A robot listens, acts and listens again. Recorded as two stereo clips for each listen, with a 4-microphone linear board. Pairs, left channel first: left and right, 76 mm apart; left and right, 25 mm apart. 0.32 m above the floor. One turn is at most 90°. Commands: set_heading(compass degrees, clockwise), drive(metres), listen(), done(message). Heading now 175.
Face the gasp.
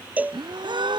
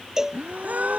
set_heading(265)
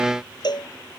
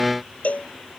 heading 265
done("Facing where the gasp came from. I can't hear it now.")